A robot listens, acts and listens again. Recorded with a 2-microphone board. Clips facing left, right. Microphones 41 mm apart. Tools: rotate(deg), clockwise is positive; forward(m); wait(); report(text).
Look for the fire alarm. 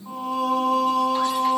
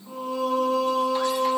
wait()
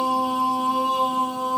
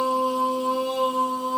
wait()
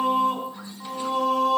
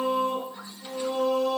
report("I can't make out a fire alarm, only singing.")